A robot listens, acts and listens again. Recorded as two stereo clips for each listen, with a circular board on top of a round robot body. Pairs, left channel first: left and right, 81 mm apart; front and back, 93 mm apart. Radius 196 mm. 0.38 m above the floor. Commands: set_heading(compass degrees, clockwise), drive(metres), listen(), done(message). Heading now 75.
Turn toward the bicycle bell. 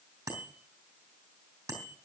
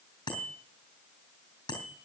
set_heading(115)
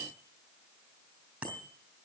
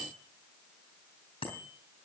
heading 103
set_heading(118)
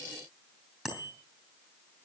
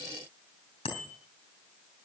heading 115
done("Facing the bicycle bell.")